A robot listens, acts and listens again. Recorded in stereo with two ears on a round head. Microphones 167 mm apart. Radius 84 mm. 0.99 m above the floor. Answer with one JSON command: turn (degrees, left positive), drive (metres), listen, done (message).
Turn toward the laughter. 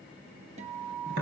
{"listen": true}
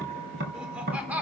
{"turn": -30}
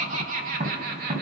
{"turn": -125}
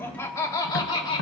{"turn": 30}
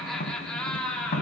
{"done": "Found it: laughter, straight ahead, 1 to 2 m away."}